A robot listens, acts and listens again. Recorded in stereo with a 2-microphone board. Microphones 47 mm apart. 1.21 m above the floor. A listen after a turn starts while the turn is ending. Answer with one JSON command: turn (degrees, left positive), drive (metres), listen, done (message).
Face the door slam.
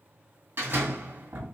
{"turn": -60}
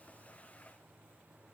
{"listen": true}
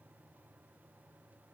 {"done": "I heard a door slam, but can't make it out now. It was about straight ahead or 60° right."}